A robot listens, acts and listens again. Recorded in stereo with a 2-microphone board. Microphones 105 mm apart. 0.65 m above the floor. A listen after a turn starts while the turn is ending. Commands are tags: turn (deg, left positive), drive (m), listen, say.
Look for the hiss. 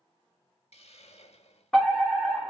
<turn deg="90"/>
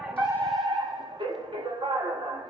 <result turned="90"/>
<listen/>
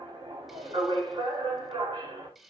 <say>Found it: a hiss, straight ahead, under 1 m away.</say>